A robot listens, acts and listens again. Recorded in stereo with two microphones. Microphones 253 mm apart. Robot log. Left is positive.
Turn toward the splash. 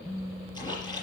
note: The splash: about 15° left or 165° left.
cmd yaw +15
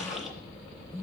end: Facing the splash, over 4 m away.